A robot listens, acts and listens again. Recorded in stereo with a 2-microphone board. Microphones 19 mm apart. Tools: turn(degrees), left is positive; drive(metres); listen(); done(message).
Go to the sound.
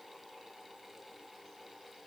listen()
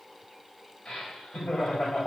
turn(degrees=90)
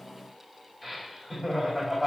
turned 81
drive(metres=1.0)
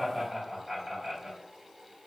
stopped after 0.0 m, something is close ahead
done("Blocked. The laughter is further on, straight ahead.")